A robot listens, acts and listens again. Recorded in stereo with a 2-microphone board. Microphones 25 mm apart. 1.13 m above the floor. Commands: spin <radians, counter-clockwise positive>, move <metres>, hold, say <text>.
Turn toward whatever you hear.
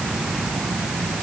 hold
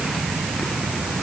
hold
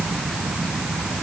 say I can't make out anything.